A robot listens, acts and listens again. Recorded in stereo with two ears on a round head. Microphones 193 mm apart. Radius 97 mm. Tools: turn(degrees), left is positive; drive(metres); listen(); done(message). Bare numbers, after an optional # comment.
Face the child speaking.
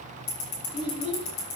# The child speaking: about 25° left or 155° left.
turn(25)
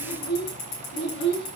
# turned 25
# So it is at 125° left.
turn(125)
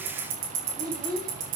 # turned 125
# The child speaking is now 20° right.
turn(-20)
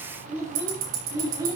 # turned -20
# The child speaking is now 15° right.
turn(-15)
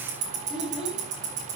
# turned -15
done("Facing the child speaking.")